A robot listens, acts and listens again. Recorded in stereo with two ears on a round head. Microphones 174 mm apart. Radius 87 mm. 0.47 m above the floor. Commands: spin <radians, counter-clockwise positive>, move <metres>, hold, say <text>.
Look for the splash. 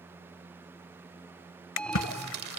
spin 1.31
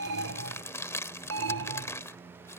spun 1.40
hold
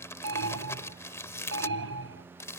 say I heard a splash, but can't make it out now. It was about 5° right or 25° left.